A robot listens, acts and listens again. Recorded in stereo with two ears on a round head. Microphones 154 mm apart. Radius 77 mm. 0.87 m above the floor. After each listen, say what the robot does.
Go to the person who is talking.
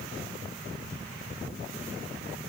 Keep listening.
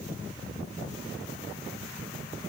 Keep listening.
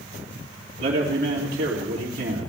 Turn 55° right.
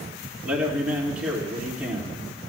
Turn 10° right.
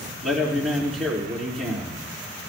Drive 1.0 m forward.
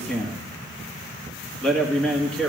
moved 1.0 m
Drive 1.0 m forward.
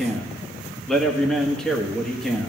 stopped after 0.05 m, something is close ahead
Arrived at the man speaking, straight ahead.